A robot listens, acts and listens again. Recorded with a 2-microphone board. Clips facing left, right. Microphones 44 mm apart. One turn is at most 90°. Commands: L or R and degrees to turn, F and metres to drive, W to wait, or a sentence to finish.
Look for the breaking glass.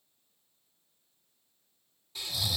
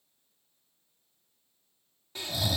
W
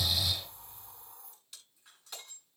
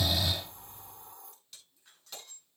L30
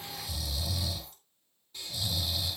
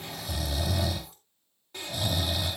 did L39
W
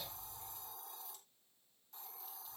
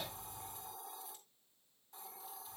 I heard breaking glass, but can't make it out now. It was about 30° right or 130° left.